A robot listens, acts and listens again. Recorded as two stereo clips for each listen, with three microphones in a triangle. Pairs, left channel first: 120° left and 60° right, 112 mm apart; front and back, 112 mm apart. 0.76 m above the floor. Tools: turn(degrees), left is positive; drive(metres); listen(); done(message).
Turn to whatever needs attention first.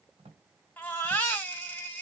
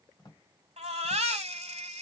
turn(degrees=-165)
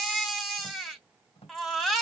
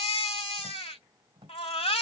turn(degrees=30)
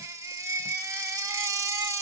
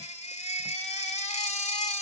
done("Found it: a baby crying, straight ahead.")